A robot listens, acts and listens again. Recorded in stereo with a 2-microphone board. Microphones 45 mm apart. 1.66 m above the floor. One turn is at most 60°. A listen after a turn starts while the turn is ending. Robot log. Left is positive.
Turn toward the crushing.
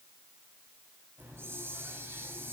cmd idle
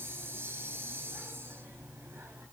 cmd idle
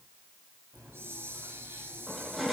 cmd yaw -30
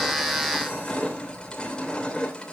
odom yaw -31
note: So it is at 25° left.
cmd yaw +25
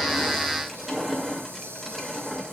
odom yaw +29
end: Found it: crushing, straight ahead, 2 to 4 m away.